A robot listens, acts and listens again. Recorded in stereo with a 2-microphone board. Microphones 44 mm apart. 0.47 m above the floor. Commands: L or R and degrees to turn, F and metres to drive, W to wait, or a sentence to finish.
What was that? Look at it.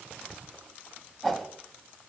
R30
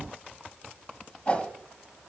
L25
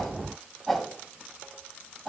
Found it: a whoosh, straight ahead.